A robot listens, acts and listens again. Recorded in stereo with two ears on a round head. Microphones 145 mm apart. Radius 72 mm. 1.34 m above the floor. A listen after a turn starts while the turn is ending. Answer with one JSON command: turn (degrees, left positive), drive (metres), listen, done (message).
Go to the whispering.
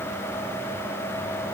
{"listen": true}
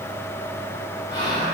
{"turn": 75}
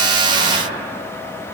{"turn": 30}
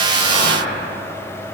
{"turn": 10}
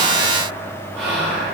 {"drive": 1.0}
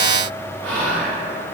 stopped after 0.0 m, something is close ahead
{"turn": 10}
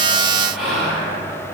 {"done": "Something is in my way. I am facing the whispering but have not reached it."}